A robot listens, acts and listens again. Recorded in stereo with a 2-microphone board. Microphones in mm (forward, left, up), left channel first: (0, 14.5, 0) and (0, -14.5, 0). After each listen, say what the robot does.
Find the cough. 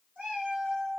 Keep listening.
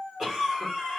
Turn 25° right.
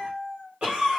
Turn 130° right.
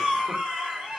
Turn 45° right.
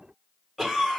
Facing the cough, 1 to 2 m away.